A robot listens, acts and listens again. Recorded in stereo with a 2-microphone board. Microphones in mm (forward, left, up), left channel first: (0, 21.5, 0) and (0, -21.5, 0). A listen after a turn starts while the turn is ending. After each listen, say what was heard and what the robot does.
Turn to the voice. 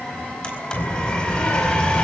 The child speaking: about 55° left or 125° left. Turn 55° left.
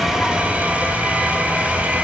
Keep listening.
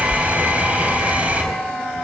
Facing the child speaking.